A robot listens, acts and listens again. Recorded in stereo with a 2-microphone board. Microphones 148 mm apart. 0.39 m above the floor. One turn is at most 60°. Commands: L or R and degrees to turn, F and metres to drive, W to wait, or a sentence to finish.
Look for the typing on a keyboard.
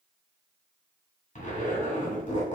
W
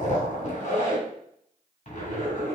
W
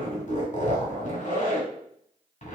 I can't make out typing on a keyboard to turn to.